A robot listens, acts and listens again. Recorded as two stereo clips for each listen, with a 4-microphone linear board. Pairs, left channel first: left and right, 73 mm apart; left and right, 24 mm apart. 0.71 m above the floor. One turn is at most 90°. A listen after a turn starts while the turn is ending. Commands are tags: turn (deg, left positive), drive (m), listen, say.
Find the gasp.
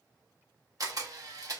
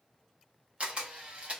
<listen/>
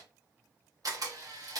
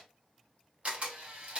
<listen/>
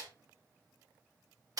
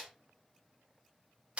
<say>I can't make out a gasp, only a camera shutter.</say>